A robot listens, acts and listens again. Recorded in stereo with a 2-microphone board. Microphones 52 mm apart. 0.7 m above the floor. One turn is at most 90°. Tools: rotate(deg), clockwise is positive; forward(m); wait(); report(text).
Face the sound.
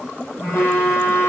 rotate(-45)
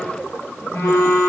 rotate(-90)
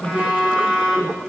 rotate(20)
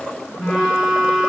report("Facing the phone buzzing.")